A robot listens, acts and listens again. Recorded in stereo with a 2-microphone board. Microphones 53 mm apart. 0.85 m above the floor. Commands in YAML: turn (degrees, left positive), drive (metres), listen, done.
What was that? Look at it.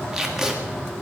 turn: -30
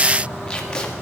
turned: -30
turn: 20
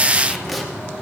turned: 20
done: "Facing the tape being pulled."